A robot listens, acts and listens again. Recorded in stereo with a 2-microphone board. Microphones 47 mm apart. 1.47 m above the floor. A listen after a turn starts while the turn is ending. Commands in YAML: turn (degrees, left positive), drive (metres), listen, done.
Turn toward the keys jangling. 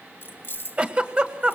turn: 50
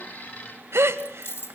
turn: 70
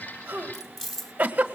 done: "Facing the keys jangling, 1 to 2 m away."